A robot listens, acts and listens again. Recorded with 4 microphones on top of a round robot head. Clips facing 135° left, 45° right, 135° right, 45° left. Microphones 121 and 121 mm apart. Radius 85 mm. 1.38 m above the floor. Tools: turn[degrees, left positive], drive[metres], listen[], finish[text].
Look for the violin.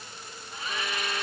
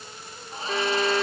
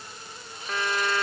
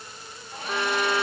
Thought: The violin: 30° right.
Action: turn[-30]
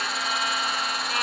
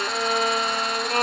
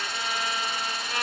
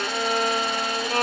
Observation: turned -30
Action: finish[Facing the violin.]